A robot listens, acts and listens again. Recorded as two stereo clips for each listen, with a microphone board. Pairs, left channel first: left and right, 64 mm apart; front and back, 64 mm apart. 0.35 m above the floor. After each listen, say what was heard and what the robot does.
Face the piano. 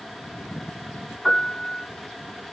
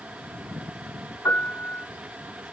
Found it: a piano, straight ahead, 1 to 2 m away.